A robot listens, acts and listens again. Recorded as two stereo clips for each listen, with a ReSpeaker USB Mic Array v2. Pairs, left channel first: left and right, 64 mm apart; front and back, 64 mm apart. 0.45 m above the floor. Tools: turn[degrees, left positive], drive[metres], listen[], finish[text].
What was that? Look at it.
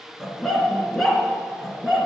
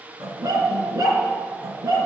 Thought: The dog barking: 175° right.
Action: turn[-175]
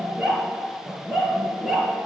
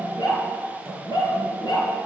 Action: finish[Found it: a dog barking, straight ahead.]